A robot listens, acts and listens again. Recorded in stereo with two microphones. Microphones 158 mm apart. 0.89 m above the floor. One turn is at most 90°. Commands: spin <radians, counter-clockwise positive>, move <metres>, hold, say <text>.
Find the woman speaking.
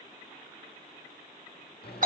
hold
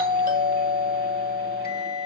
hold
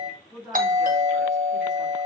spin -0.52
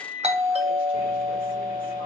hold
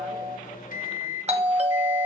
hold
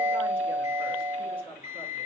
spin -1.57
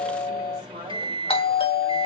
spin -0.96
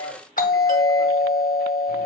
hold
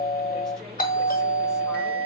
say I heard a woman speaking from this way, but can't make it out now.